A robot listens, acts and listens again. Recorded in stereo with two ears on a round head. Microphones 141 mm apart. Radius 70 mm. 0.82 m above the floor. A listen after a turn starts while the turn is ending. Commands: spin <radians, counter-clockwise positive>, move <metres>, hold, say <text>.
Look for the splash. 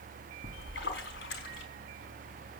spin 1.57
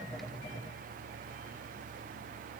say Facing where the splash came from. I can't hear it now.